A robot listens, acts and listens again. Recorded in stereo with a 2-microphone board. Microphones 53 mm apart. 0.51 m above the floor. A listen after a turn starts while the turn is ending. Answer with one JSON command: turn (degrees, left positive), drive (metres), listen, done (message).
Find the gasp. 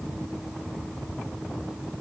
{"listen": true}
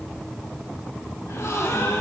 {"turn": 75}
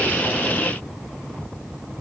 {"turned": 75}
{"listen": true}
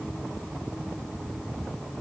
{"done": "I heard a gasp, but can't make it out now. It was about straight ahead or 30° left."}